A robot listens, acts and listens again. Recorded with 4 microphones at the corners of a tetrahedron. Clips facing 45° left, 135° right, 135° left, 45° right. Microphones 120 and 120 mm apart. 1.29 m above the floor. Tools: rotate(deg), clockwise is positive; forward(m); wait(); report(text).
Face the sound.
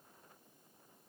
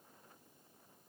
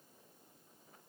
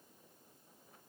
wait()
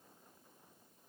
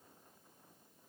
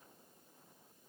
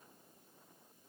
wait()
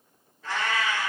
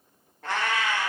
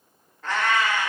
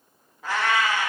rotate(125)
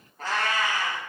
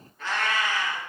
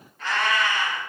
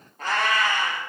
report("Facing the cat meowing, 1 to 2 m away.")